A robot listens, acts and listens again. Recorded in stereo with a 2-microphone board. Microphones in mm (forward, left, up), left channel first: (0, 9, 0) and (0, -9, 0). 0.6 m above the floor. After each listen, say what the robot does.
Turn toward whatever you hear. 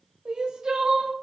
Turn 55° right.
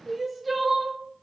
Found it: crying, straight ahead, under 1 m away.